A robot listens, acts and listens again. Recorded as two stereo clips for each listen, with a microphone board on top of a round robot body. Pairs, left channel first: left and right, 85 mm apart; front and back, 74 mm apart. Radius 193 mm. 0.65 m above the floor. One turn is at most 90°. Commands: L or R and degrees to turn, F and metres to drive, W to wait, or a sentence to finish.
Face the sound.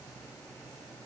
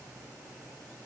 W
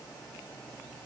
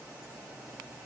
W
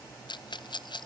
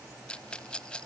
L75
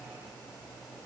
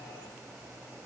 W
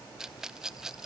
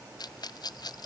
Facing the rattle, under 1 m away.